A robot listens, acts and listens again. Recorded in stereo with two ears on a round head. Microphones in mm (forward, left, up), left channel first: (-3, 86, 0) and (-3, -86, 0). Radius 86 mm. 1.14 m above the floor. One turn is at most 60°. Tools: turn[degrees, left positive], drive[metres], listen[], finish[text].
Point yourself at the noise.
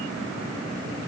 Action: listen[]
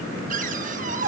Thought: The cupboard door: about 45° right or 135° right.
Action: turn[-45]
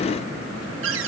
Thought: So it is at 90° right.
Action: turn[-60]
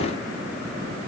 Thought: Nothing new. It was at 30° right.
Action: turn[-30]
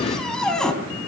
Action: finish[Found it: a cupboard door, straight ahead.]